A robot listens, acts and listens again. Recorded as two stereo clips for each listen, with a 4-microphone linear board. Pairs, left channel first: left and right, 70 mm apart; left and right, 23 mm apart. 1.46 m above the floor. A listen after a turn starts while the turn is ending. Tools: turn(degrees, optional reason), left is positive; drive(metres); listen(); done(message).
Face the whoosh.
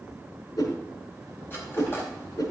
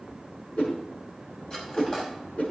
turn(degrees=65, reason="The whoosh: about 65° left or 115° left.")
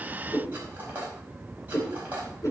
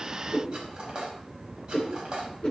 turn(degrees=50, reason="So it is at 50° left.")
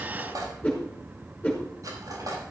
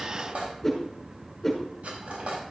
turn(degrees=20, reason="The whoosh is now 20° left.")
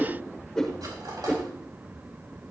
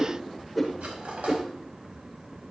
done("Found it: a whoosh, straight ahead.")